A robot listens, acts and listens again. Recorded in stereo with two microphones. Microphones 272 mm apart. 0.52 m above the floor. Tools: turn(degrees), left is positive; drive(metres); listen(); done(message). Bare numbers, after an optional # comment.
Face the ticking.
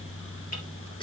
listen()
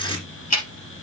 # The ticking: about 65° left or 115° left.
turn(65)
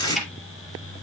done("Facing the ticking, 2 to 4 m away.")